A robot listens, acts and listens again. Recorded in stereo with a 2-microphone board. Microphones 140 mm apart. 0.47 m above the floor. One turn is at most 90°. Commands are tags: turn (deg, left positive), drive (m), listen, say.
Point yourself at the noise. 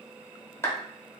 <turn deg="20"/>
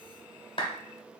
<turn deg="90"/>
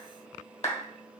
<turn deg="65"/>
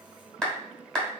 <say>Found it: a clap, straight ahead, 1 to 2 m away.</say>